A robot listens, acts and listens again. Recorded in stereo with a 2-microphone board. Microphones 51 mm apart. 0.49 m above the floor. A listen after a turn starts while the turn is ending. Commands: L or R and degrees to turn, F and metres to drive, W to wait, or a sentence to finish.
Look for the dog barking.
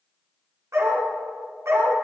R65
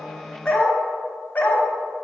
L40
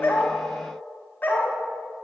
L40
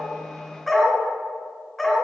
Found it: a dog barking, straight ahead.